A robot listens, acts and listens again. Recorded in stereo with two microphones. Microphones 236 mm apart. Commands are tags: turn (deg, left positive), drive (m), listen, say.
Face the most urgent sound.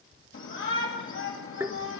<turn deg="60"/>
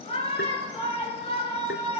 <turn deg="30"/>
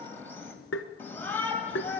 <turn deg="10"/>
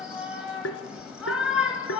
<say>Facing the shout.</say>